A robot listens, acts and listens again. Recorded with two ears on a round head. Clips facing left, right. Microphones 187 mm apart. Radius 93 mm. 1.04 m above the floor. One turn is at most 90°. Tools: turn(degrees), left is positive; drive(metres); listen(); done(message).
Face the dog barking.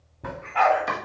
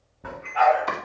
turn(degrees=60)
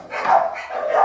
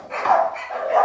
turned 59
turn(degrees=25)
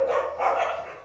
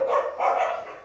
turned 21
turn(degrees=15)
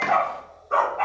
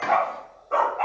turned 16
turn(degrees=20)
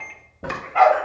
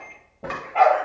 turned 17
turn(degrees=20)
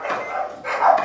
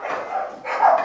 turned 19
turn(degrees=10)
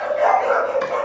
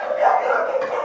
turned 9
done("Facing the dog barking.")